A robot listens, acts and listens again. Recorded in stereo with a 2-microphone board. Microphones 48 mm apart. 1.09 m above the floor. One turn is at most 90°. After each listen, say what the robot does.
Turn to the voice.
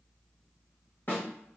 Keep listening.
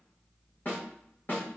Keep listening.
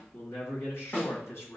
Turn 90° left.
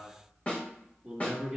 Facing the man speaking.